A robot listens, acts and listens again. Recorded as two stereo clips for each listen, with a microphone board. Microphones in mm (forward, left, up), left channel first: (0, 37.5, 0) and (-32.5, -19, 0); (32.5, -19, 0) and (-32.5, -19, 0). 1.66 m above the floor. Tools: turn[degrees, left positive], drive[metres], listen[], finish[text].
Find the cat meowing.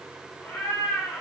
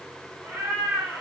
Thought: The cat meowing: 130° left.
Action: turn[130]
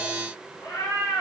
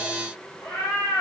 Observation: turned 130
Thought: The cat meowing is now 45° left.
Action: turn[45]
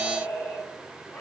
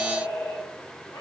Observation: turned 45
Action: finish[Facing the cat meowing.]